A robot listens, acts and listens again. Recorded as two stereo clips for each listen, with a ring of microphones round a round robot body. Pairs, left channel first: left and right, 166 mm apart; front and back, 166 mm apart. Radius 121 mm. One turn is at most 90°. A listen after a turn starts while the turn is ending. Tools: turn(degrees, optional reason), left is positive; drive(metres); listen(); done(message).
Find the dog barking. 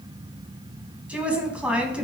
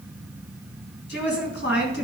listen()
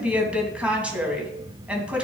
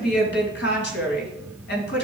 listen()
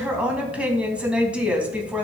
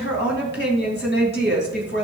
done("I can't make out a dog barking to turn to.")